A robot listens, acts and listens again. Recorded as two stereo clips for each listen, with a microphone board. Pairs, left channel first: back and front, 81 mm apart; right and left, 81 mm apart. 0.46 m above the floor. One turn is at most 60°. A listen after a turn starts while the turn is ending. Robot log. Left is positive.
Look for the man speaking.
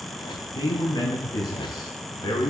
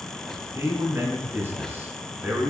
note: The man speaking: 160° left.
cmd yaw +60
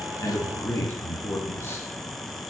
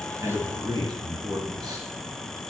note: The man speaking is now 120° left.
cmd yaw +60
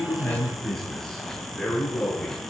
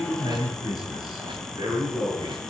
note: The man speaking is now 100° left.
cmd yaw +60
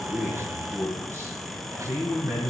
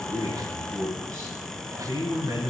note: The man speaking is now 50° left.
cmd yaw +50
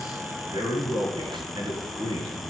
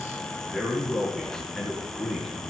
end: Facing the man speaking.